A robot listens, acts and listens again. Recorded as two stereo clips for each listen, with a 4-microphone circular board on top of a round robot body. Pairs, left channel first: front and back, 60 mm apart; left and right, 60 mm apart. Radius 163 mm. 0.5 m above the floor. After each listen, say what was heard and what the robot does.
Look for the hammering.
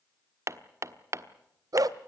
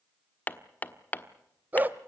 The hammering: 145° left. Turn 145° left.
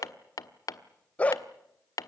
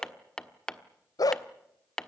The hammering is now 10° left. Turn 10° left.
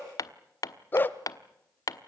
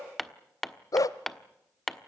Facing the hammering.